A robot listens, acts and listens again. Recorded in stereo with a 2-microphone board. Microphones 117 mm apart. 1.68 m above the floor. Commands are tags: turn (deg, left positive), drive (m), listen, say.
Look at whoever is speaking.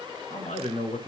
<turn deg="90"/>
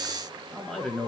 <turn deg="10"/>
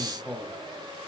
<say>Found it: a man speaking, straight ahead.</say>